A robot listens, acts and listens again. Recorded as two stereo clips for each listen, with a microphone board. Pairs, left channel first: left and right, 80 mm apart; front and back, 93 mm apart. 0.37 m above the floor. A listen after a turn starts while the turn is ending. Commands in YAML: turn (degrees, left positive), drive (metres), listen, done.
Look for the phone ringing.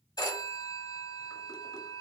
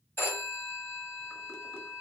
turn: 65
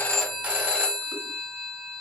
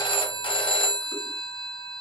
turn: -15
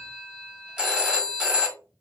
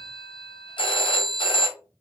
turn: -10
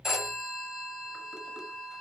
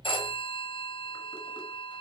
done: "Facing the phone ringing, 1 to 2 m away."